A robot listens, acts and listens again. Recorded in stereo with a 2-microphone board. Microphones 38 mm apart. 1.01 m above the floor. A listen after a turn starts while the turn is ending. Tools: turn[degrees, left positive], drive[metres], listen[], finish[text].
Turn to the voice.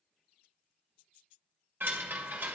Action: listen[]
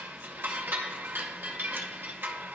Action: listen[]
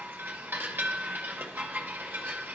Action: finish[I can't make out anyone speaking to turn to.]